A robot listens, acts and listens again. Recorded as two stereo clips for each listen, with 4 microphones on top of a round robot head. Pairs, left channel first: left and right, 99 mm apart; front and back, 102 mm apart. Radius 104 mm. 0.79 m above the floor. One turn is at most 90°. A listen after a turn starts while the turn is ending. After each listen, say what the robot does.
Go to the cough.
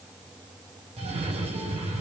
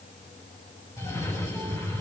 Turn 65° right.
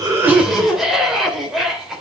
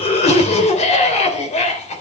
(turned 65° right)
Drive 1.0 m forward.
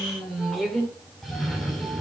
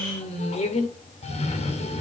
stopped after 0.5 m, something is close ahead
Something is in my way. I am facing the cough but have not reached it.